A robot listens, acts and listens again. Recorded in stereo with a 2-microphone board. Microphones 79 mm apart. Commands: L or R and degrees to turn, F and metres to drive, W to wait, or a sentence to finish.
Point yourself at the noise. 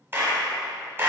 R30
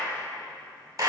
R120
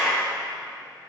Found it: a clap, straight ahead.